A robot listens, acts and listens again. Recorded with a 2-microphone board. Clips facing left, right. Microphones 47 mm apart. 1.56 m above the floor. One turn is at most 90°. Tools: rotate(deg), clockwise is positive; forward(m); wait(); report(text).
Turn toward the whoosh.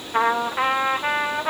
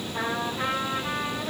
wait()
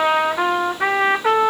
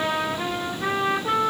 wait()
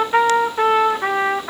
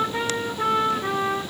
report("I can't make out a whoosh, only a trumpet.")